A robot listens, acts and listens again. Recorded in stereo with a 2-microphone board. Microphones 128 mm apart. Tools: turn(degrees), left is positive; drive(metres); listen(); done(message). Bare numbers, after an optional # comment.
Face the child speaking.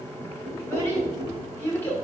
# The child speaking: about 15° left or 165° left.
turn(15)
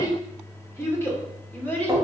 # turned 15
turn(30)
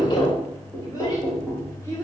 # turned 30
# The child speaking: about 20° left or 160° left.
turn(20)
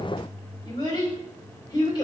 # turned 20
# So it is at 145° left.
turn(145)
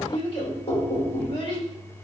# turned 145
# The child speaking is now 50° left.
turn(50)
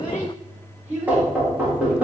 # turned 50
# The child speaking is now 15° right.
turn(-15)
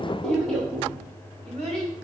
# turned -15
done("Found it: a child speaking, straight ahead.")